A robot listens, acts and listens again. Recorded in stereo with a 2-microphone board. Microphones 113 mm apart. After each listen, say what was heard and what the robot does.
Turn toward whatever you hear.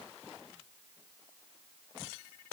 Keep listening.
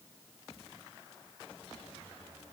Keep listening.
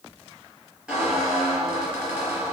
Turn 30° right.
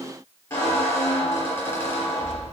So it is at 25° left. Turn 25° left.
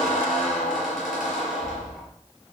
Found it: a squeak, straight ahead, over 4 m away.